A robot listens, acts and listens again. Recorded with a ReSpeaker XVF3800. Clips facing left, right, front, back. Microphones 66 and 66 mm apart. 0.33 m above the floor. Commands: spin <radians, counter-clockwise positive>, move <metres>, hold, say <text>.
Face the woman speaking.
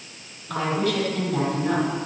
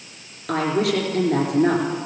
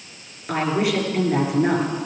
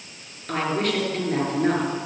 spin -1.40
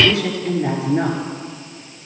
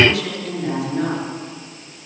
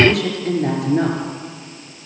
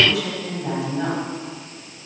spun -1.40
spin 0.44
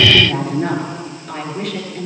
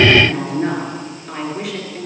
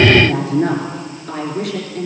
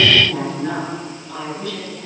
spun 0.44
say Facing the woman speaking.